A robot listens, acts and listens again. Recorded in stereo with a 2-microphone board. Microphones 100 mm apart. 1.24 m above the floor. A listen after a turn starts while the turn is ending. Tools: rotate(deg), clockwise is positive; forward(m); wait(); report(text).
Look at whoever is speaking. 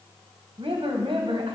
rotate(65)
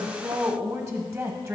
rotate(30)
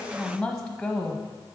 report("Found it: a woman speaking, straight ahead.")